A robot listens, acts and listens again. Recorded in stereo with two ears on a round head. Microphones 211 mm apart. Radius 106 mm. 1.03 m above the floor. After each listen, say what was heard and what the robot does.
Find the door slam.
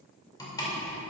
The door slam: about 15° left or 165° left. Turn 15° left.
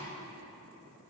Keep listening.
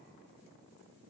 I heard a door slam, but can't make it out now. It was about straight ahead or 150° left.